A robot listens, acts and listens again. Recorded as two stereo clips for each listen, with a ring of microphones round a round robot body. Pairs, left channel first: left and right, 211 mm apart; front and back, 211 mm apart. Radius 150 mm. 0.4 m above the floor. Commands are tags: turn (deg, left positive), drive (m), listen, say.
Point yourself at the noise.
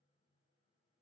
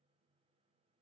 <listen/>
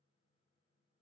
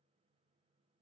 <listen/>
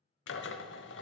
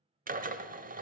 <turn deg="130"/>
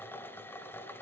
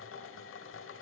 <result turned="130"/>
<turn deg="10"/>
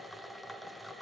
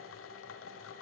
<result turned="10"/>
<say>Found it: a drill, straight ahead, 1 to 2 m away.</say>